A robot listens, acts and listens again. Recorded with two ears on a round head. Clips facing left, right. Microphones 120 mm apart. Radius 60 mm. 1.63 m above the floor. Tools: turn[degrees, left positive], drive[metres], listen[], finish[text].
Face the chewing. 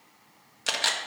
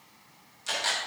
Action: listen[]
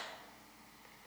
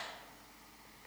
Action: listen[]
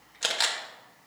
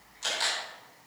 Action: finish[I can't make out chewing to turn to.]